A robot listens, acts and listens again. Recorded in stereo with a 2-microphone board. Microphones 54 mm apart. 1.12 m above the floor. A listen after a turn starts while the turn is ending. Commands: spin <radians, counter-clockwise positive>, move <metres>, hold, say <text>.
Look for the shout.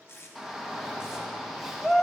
spin 0.52
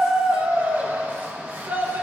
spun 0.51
spin -0.52
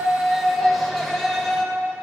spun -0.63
say Found it: a shout, straight ahead, 1 to 2 m away.